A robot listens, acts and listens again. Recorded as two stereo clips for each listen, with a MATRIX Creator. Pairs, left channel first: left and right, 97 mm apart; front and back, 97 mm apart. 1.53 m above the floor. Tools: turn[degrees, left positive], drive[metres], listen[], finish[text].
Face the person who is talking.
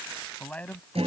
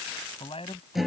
Thought: The man speaking: 15° left.
Action: turn[15]
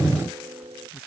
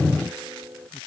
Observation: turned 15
Action: listen[]
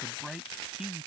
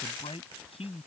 Action: finish[Found it: a man speaking, straight ahead.]